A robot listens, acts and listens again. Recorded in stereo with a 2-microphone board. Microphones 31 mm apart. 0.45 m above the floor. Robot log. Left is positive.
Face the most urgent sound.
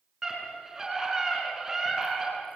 cmd yaw -30
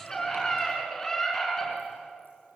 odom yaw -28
note: So it is at 15° left.
cmd yaw +15
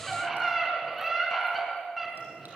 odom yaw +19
end: Facing the scream, over 4 m away.